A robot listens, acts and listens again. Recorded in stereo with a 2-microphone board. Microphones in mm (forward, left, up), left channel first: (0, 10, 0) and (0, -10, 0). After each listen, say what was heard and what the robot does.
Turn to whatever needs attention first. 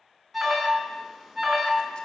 Turn 30° left.
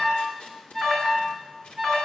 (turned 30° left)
So it is at 145° left. Turn 145° left.
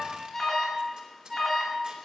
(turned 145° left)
The alarm is now 10° left. Turn 10° left.
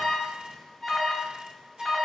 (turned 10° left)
Found it: an alarm, straight ahead.